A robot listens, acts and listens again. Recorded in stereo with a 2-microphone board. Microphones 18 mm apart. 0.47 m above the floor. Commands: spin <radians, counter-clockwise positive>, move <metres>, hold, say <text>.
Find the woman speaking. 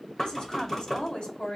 spin 1.05
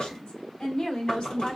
spin 0.96
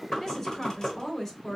spin 0.44
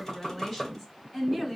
spin 0.17
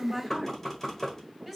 say Found it: a woman speaking, straight ahead, over 4 m away.